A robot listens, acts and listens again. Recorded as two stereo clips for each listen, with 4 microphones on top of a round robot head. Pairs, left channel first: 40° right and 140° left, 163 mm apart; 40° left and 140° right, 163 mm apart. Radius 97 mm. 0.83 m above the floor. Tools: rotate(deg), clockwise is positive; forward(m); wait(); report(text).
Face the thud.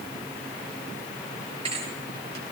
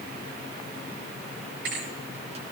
rotate(160)
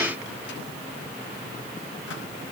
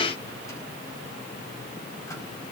report("Facing where the thud came from. I can't hear it now.")